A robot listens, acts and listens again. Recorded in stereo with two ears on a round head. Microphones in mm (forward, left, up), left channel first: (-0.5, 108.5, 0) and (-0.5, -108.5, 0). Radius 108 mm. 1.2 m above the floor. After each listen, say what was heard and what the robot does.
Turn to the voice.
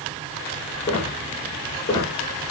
Keep listening.
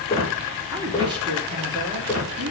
The woman speaking: about 20° right or 160° right. Turn 20° right.
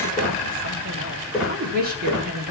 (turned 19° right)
So it is at 140° right. Turn 140° right.
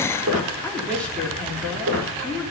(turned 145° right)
Facing the woman speaking.